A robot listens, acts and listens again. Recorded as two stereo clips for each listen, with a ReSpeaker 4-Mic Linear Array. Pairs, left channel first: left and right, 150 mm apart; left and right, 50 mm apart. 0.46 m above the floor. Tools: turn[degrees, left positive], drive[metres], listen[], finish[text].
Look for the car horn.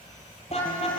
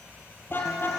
Thought: The car horn: about 45° left or 135° left.
Action: turn[45]
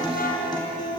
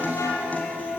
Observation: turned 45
Thought: So it is at 90° left.
Action: turn[90]
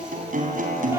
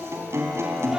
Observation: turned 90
Action: listen[]
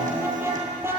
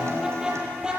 Thought: The car horn is now 15° right.
Action: turn[-15]
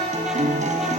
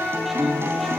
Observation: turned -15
Action: finish[Found it: a car horn, straight ahead.]